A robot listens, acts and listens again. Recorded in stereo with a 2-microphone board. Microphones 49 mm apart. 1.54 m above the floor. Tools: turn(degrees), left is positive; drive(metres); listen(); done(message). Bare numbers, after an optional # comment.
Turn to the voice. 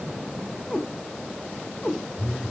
listen()
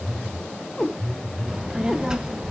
turn(-30)
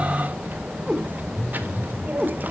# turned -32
# So it is at 130° right.
turn(-130)
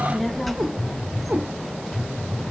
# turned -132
done("Found it: a child speaking, straight ahead, 1 to 2 m away.")